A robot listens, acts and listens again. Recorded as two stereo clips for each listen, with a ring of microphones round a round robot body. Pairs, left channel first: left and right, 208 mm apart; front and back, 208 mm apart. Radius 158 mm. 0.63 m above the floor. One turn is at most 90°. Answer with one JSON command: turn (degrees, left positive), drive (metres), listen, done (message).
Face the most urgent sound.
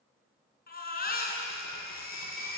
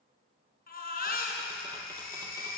{"turn": 45}
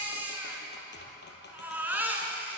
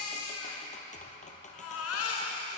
{"turn": -10}
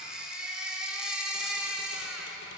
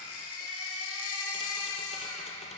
{"done": "Facing the baby crying, over 4 m away."}